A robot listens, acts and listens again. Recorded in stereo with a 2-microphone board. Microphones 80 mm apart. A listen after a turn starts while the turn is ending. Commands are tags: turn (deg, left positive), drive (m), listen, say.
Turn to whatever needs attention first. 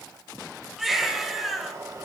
<turn deg="-30"/>
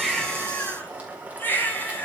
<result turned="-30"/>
<turn deg="25"/>
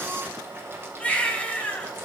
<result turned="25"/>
<turn deg="15"/>
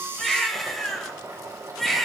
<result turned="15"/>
<say>Found it: a baby crying, straight ahead.</say>